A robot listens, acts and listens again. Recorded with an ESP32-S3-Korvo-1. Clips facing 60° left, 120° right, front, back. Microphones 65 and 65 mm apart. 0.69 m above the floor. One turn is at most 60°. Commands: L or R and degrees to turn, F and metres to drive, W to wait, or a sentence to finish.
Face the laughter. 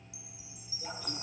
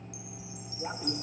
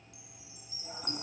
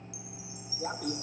L60
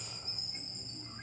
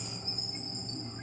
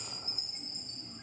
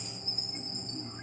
L60
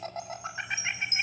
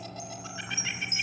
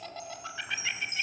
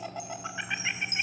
L60
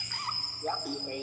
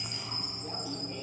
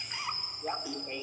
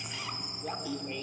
L60
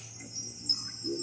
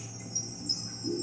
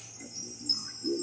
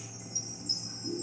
Facing the laughter.